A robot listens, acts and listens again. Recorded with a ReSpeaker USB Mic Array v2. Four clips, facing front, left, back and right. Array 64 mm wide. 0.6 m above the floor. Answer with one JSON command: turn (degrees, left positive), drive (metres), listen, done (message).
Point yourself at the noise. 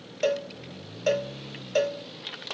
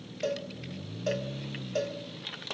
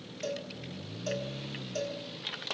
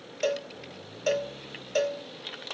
{"turn": -30}
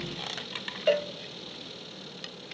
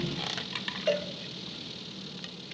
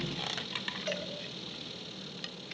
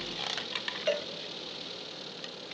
{"done": "Found it: a cowbell, straight ahead, under 1 m away."}